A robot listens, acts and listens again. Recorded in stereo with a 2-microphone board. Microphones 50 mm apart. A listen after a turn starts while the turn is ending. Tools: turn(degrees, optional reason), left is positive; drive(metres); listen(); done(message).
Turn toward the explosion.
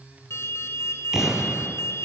turn(degrees=-30)
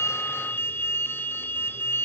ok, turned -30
listen()
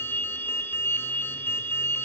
done("I heard an explosion, but can't make it out now. It was about 20° left or 140° right.")